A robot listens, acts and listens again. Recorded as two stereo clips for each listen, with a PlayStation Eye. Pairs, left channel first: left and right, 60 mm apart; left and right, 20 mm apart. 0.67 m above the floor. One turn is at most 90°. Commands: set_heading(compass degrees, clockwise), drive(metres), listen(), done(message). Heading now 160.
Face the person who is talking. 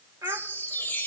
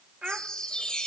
set_heading(220)
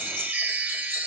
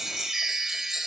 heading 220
listen()
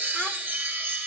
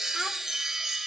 listen()
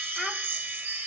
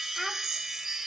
done("I heard a child speaking, but can't make it out now. It was about straight ahead or 60° right.")